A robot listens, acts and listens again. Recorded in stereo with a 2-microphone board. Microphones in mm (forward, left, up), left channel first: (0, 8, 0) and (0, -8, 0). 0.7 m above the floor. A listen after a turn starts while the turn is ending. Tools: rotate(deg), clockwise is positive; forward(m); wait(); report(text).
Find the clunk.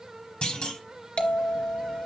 rotate(-65)
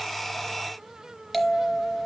wait()
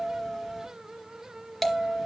report("I heard a clunk, but can't make it out now. It was about straight ahead or 50° left.")